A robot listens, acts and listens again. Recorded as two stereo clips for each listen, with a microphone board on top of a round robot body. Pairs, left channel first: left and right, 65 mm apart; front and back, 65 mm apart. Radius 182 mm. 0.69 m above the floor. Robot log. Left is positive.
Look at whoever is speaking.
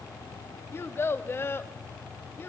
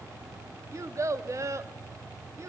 note: The child speaking: 140° left.
cmd yaw +140
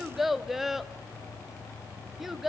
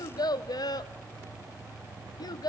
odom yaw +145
end: Facing the child speaking, under 1 m away.